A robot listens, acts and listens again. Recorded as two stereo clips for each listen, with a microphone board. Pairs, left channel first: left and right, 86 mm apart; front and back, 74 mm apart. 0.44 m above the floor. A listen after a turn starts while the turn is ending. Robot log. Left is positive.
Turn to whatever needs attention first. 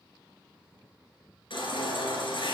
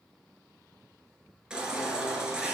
note: The baby crying: 100° left.
cmd yaw +100
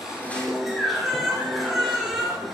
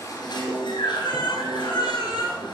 end: Facing the baby crying, 2 to 4 m away.